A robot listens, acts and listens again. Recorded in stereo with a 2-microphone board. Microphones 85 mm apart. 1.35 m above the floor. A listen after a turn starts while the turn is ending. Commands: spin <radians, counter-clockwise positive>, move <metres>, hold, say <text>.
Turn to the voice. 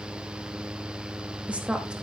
spin -0.52
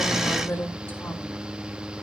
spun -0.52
spin 0.44
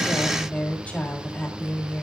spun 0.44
spin 0.35
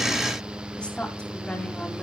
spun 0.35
spin 0.17
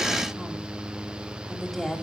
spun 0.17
say Facing the woman speaking, 2 to 4 m away.